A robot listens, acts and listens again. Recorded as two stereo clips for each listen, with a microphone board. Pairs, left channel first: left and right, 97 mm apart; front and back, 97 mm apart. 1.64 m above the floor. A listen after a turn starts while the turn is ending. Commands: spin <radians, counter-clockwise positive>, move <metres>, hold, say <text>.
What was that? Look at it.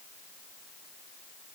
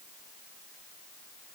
hold
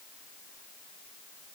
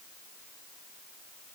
hold
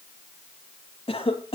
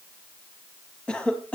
spin 1.40
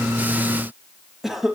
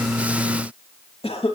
say Facing the cough.